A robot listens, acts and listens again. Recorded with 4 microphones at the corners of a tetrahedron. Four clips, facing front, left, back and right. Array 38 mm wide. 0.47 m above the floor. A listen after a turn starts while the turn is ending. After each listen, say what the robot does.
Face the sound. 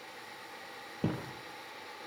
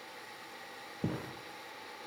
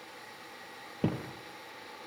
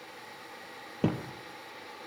Turn 115° right.
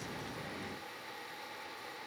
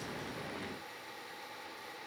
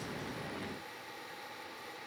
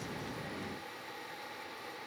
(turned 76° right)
Turn 35° right.
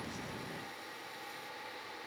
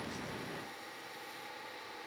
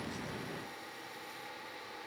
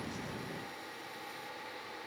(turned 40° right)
Facing where the thud came from. I can't hear it now.